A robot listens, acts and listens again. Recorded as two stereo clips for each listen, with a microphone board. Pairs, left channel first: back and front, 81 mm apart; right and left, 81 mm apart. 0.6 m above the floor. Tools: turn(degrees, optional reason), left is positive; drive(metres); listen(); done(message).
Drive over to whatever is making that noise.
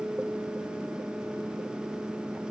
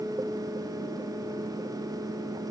listen()
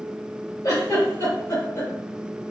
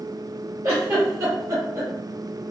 turn(degrees=135, reason="The giggle: 135° left.")
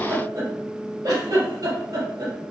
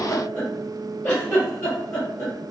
turn(degrees=-35, reason="The giggle is now 35° right.")
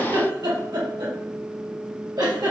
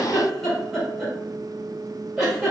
drive(metres=1.0)
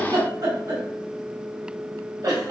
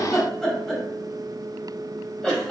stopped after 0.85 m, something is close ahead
turn(degrees=-10, reason="The giggle is now 10° right.")
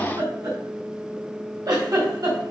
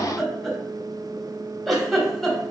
done("Arrived at the giggle, straight ahead.")